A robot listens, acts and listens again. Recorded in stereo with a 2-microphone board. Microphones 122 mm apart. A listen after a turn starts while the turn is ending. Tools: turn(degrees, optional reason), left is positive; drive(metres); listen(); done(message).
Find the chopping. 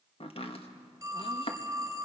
turn(degrees=50, reason="The chopping: about 50° left or 130° left.")
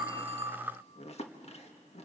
turn(degrees=70, reason="So it is at 70° left.")
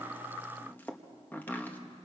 turn(degrees=15, reason="The chopping is now 15° left.")
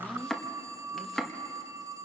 done("Facing the chopping, 1 to 2 m away.")